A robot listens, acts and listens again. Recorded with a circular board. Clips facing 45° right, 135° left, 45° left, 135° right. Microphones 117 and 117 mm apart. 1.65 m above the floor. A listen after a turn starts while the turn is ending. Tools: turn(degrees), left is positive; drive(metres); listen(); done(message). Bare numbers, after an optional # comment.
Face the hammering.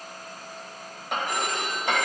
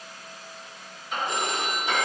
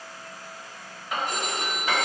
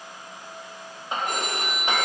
# The hammering: 70° right.
turn(-70)
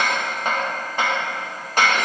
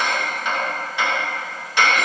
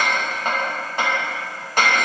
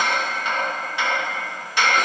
done("Found it: hammering, straight ahead, 2 to 4 m away.")